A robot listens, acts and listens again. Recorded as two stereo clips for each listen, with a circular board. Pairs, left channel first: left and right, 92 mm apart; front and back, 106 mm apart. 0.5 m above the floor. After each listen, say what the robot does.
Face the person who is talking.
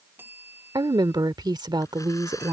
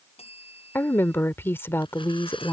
Turn 65° right.
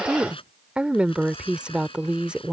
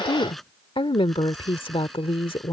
Turn 15° right.
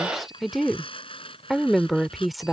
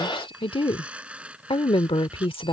Found it: a woman speaking, straight ahead.